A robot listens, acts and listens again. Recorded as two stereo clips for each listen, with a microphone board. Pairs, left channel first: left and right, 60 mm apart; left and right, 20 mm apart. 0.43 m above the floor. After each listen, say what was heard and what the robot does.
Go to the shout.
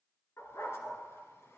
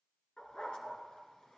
Keep listening.
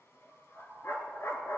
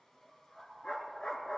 Keep listening.
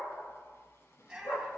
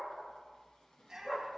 Turn 30° right.
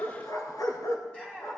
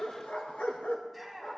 So it is at 20° left. Turn 20° left.
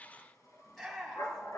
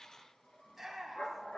Drive 1.0 m forward.
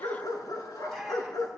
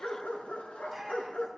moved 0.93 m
Keep listening.
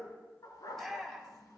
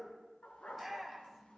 Drive 1.0 m forward.
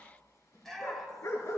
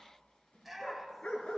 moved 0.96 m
Drive 1.0 m forward.
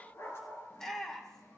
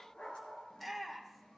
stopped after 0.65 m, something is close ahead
The shout is now 15° left. Turn 15° left.
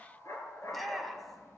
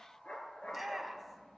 I am next to the shout.